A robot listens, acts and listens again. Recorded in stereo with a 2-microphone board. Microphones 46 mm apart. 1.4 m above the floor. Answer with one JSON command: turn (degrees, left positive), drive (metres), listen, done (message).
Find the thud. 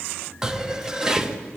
{"turn": -90}
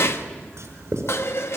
{"done": "I heard a thud from this way, but can't make it out now."}